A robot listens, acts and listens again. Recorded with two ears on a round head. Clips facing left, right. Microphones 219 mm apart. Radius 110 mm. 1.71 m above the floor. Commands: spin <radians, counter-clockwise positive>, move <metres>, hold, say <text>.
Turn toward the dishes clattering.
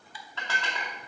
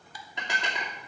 spin -0.26
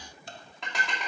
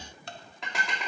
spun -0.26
say Facing the dishes clattering.